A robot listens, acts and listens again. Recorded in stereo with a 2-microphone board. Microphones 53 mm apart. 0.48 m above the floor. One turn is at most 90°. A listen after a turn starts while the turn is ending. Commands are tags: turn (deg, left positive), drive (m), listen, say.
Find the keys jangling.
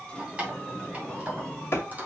<turn deg="-30"/>
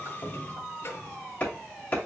<listen/>
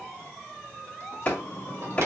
<listen/>
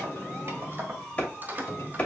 <turn deg="-35"/>
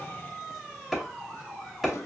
<listen/>
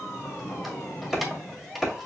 <say>Found it: keys jangling, straight ahead, 1 to 2 m away.</say>